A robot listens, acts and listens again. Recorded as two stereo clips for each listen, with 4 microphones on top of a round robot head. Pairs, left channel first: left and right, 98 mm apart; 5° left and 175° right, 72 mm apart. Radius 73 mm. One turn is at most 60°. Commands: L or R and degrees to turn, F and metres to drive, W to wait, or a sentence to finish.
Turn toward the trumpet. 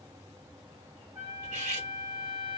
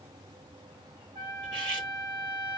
R60
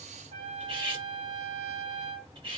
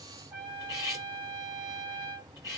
R60
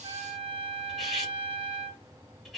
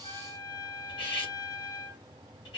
R50
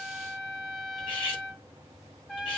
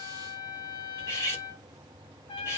Found it: a trumpet, straight ahead, 1 to 2 m away.